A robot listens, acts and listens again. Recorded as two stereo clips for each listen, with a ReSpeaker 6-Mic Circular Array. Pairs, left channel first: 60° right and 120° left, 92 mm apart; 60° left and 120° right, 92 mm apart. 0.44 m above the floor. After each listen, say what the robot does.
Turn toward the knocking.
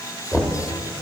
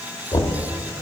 Turn 25° left.
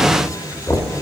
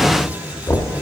Facing the knocking.